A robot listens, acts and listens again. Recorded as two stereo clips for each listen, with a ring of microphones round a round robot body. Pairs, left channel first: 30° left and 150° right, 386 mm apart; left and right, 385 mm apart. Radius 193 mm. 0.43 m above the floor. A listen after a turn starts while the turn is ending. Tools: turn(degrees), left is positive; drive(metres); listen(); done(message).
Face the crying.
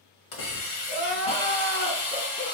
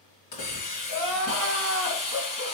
turn(degrees=-40)
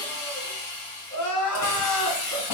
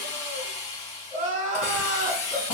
turn(degrees=-20)
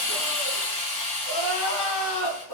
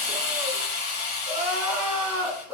done("Facing the crying.")